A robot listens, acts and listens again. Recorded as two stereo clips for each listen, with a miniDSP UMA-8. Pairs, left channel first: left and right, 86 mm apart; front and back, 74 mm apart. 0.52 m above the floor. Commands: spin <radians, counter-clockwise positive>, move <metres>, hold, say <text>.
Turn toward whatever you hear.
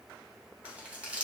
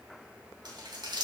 spin -2.88
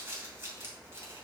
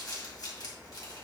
spin -0.52
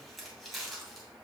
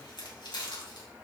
say Facing the crumpling, 2 to 4 m away.